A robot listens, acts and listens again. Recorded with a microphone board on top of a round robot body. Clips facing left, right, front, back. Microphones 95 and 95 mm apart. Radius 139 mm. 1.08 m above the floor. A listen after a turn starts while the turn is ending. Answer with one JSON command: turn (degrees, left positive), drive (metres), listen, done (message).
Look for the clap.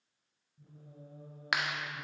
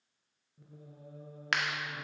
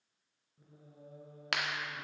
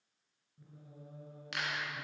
{"turn": 10}
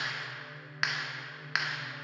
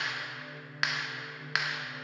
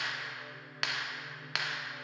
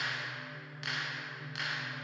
{"done": "Found it: a clap, straight ahead."}